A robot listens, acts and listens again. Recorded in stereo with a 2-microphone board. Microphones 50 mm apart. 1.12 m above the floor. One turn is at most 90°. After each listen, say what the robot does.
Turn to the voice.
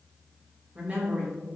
Turn 30° right.
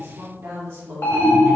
Turn 90° right.
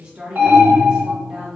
Turn 20° right.
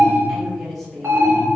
Facing the woman speaking, 1 to 2 m away.